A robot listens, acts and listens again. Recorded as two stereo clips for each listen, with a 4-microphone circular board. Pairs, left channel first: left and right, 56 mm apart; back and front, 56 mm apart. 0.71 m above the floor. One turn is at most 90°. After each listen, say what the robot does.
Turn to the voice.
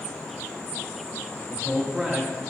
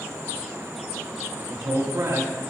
Turn 20° right.
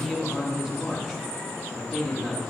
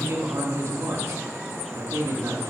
Found it: a man speaking, straight ahead, 1 to 2 m away.